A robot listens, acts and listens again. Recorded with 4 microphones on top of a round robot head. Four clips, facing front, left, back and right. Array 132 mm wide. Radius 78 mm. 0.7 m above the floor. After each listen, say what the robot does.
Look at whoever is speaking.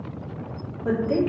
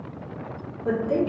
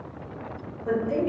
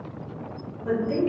Turn 30° left.
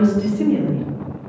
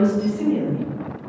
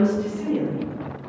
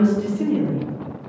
Turn 15° right.
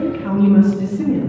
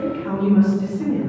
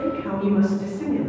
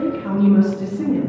Turn 45° right.
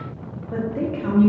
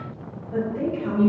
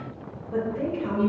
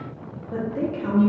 Turn 40° right.
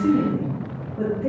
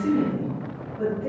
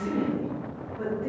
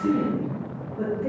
Turn 15° right.
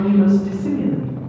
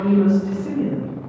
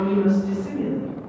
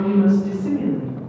Found it: a woman speaking, straight ahead, 1 to 2 m away.